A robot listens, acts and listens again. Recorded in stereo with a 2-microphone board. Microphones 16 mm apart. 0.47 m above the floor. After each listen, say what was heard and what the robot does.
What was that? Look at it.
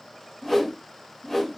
The whoosh: about 30° left or 150° left. Turn 30° left.
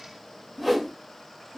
Found it: a whoosh, straight ahead.